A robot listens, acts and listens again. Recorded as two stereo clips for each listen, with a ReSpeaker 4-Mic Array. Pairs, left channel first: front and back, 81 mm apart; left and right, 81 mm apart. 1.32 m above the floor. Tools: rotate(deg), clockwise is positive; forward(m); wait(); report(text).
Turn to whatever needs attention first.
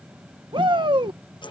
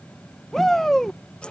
rotate(-175)
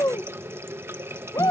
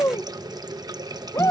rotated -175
rotate(-40)
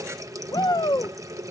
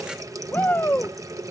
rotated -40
rotate(-30)
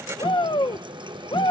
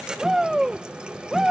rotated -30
report("Found it: a shout, straight ahead.")